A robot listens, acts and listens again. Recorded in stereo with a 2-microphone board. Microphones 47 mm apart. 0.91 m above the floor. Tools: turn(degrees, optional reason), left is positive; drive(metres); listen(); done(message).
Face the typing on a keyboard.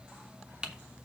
turn(degrees=-20, reason="The typing on a keyboard: about 20° right or 160° right.")
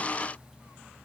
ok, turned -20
listen()
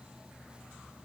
listen()
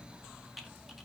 done("Facing the typing on a keyboard.")